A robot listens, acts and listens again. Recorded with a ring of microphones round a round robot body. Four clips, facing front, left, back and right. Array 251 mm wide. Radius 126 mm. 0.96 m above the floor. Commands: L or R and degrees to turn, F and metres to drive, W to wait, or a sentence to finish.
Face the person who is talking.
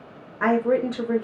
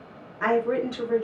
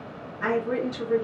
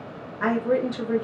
R15
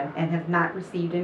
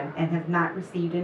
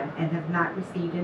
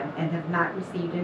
Found it: a woman speaking, straight ahead.